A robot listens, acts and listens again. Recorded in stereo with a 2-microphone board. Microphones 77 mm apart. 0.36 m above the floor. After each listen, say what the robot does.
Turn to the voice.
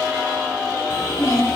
Turn 35° left.
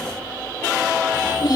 Turn 110° left.
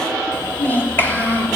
Turn 25° left.
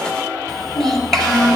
Facing the child speaking.